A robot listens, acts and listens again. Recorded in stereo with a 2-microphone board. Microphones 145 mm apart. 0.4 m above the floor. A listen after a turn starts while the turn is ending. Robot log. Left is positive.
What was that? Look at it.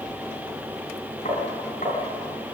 note: The tapping: about 50° left or 130° left.
cmd yaw +50
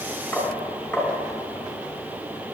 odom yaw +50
end: Found it: tapping, straight ahead, over 4 m away.